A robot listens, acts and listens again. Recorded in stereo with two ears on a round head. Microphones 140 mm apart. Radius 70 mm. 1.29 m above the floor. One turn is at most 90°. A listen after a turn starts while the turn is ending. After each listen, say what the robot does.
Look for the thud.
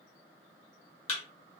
Turn 40° left.
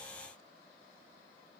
Keep listening.
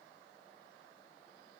I heard a thud, but can't make it out now. It was about straight ahead or 100° left.